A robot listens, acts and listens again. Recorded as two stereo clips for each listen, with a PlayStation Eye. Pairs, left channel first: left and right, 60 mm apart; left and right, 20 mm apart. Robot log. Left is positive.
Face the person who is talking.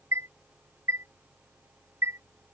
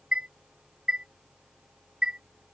cmd idle
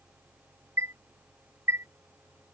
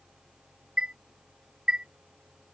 cmd idle
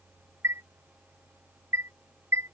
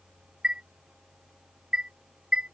end: I can't make out anyone speaking to turn to.